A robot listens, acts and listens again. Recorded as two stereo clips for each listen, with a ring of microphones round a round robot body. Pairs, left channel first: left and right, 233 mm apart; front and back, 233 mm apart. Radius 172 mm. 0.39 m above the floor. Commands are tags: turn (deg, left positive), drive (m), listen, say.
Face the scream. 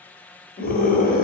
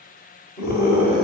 <turn deg="40"/>
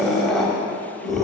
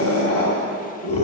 <say>Facing the scream.</say>